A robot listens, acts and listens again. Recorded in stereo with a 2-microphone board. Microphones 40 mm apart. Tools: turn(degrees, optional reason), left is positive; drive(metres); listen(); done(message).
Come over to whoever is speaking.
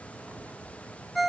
listen()
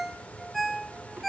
listen()
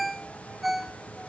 done("I can't make out anyone speaking, only a ringtone.")